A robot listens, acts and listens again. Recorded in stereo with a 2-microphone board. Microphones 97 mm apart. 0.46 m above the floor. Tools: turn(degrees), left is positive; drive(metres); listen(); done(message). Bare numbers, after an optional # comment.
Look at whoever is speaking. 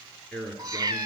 turn(30)
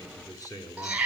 # So it is at 140° left.
turn(140)
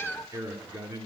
# The man speaking is now 30° right.
turn(-30)
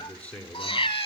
# The man speaking is now 15° left.
turn(15)
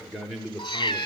done("Found it: a man speaking, straight ahead.")